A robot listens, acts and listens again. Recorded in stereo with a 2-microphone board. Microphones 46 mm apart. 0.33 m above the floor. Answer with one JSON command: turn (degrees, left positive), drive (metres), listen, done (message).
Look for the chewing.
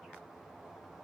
{"listen": true}
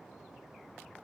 {"listen": true}
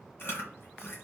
{"turn": 55}
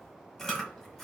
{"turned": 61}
{"done": "Facing the chewing."}